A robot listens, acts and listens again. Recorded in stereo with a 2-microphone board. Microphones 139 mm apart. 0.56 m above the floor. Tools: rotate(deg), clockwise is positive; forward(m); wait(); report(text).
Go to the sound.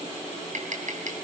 rotate(65)
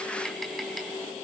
wait()
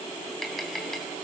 forward(1.0)
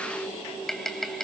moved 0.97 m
forward(1.0)
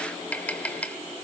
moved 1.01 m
rotate(-10)
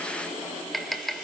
forward(1.0)
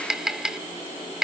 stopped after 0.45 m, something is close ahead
report("Arrived at the tapping, straight ahead.")